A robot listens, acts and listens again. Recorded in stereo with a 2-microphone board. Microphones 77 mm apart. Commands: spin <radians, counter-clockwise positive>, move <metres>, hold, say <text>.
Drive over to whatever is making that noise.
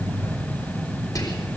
spin 0.87
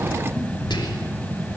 spin 1.31
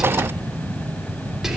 move 1.0
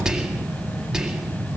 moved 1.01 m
move 1.0
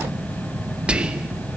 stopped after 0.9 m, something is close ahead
spin -0.17
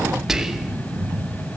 say Arrived at the whispering, straight ahead.